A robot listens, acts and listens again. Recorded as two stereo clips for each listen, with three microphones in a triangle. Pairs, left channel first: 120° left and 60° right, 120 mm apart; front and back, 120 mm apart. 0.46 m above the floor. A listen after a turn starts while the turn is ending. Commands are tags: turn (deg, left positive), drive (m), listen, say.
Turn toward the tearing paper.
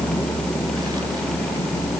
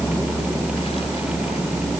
<listen/>
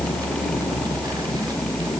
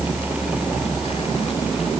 <listen/>
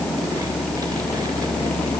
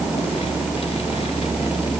<say>I can't make out tearing paper to turn to.</say>